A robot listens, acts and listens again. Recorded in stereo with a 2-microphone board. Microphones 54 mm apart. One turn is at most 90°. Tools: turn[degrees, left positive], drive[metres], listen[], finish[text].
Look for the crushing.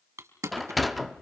Thought: The crushing: about 70° right or 110° right.
Action: turn[-70]
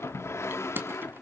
Thought: So it is at 40° right.
Action: turn[-40]
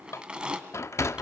Thought: The crushing is now 15° right.
Action: turn[-15]
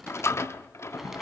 Action: listen[]
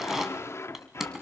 Action: finish[Facing the crushing.]